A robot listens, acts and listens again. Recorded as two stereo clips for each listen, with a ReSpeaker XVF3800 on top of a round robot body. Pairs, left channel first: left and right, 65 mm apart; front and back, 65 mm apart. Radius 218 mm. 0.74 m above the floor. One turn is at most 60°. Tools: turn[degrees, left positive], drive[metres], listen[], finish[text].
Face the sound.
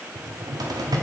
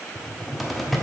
Thought: The cupboard door: 90° right.
Action: turn[-60]
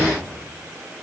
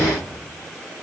Thought: The cupboard door is now 45° right.
Action: turn[-45]
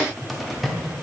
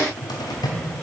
Action: finish[Found it: a cupboard door, straight ahead.]